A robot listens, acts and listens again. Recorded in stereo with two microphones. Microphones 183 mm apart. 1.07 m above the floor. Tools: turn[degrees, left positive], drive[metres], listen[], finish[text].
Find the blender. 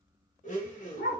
Thought: The blender: about 45° left or 135° left.
Action: turn[45]
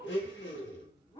Thought: So it is at 90° left.
Action: turn[90]
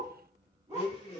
Thought: The blender is now 35° left.
Action: turn[35]
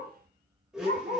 Action: finish[Found it: a blender, straight ahead, 1 to 2 m away.]